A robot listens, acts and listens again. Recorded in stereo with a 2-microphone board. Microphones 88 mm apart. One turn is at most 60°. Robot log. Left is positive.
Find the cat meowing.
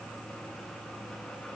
cmd idle
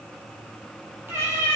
note: The cat meowing: about 30° right or 150° right.
cmd yaw -30
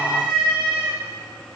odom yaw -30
note: So it is at 105° right.
cmd yaw -60
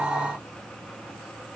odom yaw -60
note: Nothing new. It was at 45° right.
cmd yaw -45
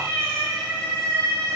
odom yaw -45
note: The cat meowing is now 10° left.
cmd yaw +10
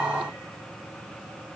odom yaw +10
cmd idle
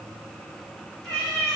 end: Found it: a cat meowing, straight ahead.